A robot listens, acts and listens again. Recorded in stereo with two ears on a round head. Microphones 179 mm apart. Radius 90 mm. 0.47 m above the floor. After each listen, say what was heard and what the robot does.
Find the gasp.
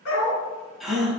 Turn 30° left.
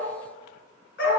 Keep listening.
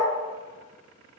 I heard a gasp, but can't make it out now. It was about 30° right or 150° left.